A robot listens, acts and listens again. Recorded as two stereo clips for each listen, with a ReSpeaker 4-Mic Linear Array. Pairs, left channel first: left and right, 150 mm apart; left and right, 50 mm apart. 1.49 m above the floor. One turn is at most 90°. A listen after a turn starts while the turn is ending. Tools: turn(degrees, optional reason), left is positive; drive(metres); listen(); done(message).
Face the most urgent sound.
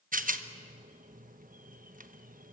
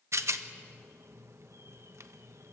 listen()
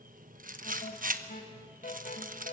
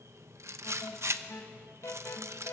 turn(degrees=70, reason="The alarm: about 70° left or 110° left.")
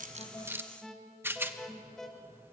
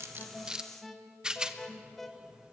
done("Facing the alarm.")